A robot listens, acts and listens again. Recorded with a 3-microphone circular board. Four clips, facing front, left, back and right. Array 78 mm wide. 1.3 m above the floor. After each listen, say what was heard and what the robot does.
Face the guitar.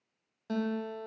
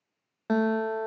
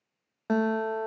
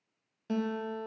The guitar: 135° left. Turn 135° left.
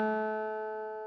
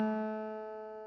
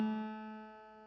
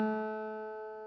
The guitar is now 10° left. Turn 10° left.
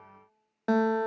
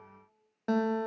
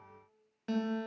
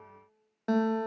Found it: a guitar, straight ahead, 1 to 2 m away.